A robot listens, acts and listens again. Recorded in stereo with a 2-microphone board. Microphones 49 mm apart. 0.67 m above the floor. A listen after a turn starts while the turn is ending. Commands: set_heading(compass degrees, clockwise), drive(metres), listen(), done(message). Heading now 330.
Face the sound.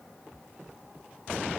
listen()
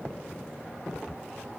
listen()
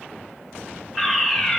set_heading(0)
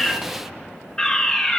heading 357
set_heading(332)
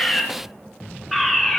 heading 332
done("Found it: a fire alarm, straight ahead, 2 to 4 m away.")